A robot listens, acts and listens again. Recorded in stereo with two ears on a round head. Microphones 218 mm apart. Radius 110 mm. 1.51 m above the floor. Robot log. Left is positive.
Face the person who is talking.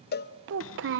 note: The child speaking: about 50° right or 130° right.
cmd yaw -50
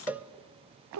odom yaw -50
note: So it is at 75° right.
cmd yaw -75
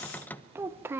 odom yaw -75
note: The child speaking is now 10° right.
cmd yaw -10
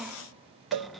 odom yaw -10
cmd idle
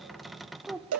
end: Found it: a child speaking, straight ahead, under 1 m away.